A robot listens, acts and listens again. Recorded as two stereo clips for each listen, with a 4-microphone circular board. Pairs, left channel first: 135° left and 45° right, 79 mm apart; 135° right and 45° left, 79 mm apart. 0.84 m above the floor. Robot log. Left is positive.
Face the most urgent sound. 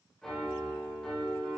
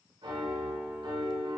cmd idle
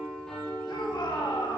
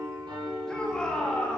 note: The shout: 145° left.
cmd yaw +145
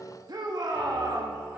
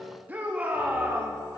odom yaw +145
note: The shout is now 20° right.
cmd yaw -20
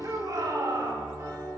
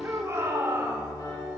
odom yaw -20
end: Facing the shout.